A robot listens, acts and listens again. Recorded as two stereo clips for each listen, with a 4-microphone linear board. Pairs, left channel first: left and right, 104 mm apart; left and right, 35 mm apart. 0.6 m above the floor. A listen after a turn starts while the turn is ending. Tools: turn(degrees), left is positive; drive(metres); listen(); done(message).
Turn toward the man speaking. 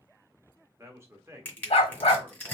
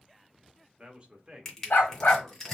turn(degrees=-25)
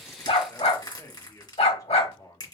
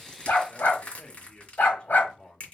turn(degrees=40)
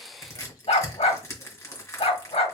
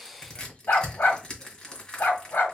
listen()
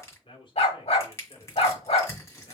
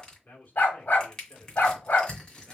turn(degrees=55)
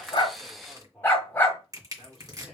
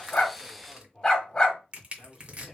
done("Found it: a man speaking, straight ahead.")